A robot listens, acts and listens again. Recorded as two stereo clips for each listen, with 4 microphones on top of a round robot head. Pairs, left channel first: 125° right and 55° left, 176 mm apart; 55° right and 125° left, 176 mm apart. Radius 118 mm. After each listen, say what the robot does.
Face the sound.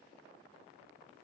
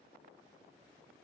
Keep listening.
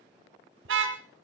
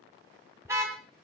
Turn 45° left.
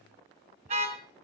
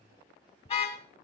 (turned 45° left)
Found it: a car horn, straight ahead, 2 to 4 m away.